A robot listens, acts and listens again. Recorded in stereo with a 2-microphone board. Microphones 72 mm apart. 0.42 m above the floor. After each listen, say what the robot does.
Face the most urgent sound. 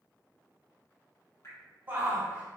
Turn 25° right.
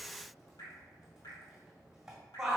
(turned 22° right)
Turn 10° right.
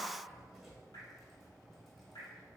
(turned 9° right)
Keep listening.
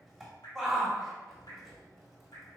Facing the shout, 1 to 2 m away.